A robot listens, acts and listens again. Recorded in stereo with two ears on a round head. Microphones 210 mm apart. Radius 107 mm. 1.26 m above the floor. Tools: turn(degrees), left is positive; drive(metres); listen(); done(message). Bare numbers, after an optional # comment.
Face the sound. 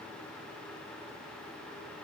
listen()
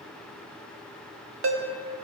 # The ringtone: about 55° right or 125° right.
turn(-55)
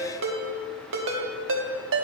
# So it is at 60° right.
turn(-60)
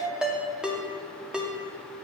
done("Found it: a ringtone, straight ahead, 1 to 2 m away.")